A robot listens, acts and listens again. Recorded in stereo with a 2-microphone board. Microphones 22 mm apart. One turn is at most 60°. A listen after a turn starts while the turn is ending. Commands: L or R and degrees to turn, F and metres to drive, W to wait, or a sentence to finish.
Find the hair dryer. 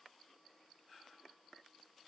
W
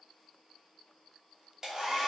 R30
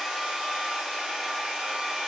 R60
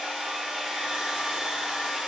R55
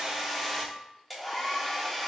Found it: a hair dryer, straight ahead, 1 to 2 m away.